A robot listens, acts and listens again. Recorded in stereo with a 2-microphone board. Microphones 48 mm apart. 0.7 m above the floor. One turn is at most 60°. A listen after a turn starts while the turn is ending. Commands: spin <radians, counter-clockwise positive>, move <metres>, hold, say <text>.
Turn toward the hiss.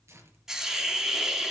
spin -0.52
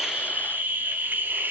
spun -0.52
spin -1.05
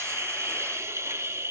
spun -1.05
spin -1.05
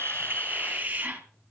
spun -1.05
spin -0.61
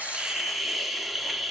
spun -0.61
say Facing the hiss, 2 to 4 m away.